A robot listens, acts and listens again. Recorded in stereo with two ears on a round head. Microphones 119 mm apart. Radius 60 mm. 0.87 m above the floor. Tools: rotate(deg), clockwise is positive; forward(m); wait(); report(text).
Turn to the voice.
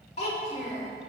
rotate(-50)
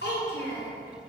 rotate(-80)
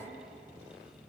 wait()
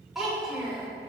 report("Facing the child speaking, 1 to 2 m away.")